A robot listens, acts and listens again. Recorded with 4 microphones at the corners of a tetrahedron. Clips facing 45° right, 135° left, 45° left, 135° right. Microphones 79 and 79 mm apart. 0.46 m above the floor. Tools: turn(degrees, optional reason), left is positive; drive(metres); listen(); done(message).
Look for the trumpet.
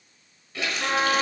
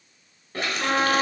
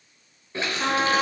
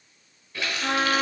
turn(degrees=55, reason="The trumpet: 55° left.")
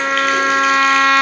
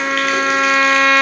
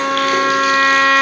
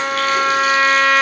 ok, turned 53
done("Facing the trumpet.")